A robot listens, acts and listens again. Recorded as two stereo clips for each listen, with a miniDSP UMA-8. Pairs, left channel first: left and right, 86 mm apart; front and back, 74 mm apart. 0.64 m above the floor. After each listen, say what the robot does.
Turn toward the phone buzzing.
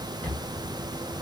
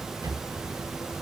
Keep listening.
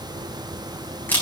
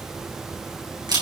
Keep listening.
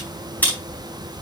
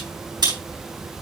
I can't make out a phone buzzing, only a camera shutter.